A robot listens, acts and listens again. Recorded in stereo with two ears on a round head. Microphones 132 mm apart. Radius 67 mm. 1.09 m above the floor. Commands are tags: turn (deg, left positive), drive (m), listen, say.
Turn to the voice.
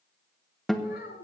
<turn deg="90"/>
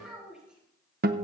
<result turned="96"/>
<say>Found it: a child speaking, straight ahead, over 4 m away.</say>